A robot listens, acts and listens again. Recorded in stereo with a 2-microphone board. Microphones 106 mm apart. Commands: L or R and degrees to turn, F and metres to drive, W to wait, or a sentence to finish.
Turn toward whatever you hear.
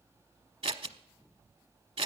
R70
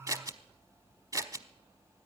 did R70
R35
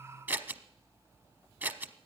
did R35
R20
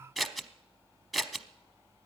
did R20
Found it: scissors, straight ahead, under 1 m away.